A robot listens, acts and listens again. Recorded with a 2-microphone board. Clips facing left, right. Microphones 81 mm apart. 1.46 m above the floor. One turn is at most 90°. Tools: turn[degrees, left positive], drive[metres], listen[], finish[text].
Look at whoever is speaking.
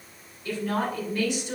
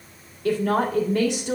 Thought: The woman speaking: about 70° right or 110° right.
Action: turn[-70]
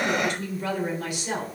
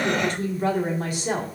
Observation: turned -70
Thought: So it is at 40° right.
Action: turn[-40]
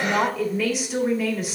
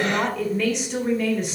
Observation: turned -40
Action: finish[Facing the woman speaking.]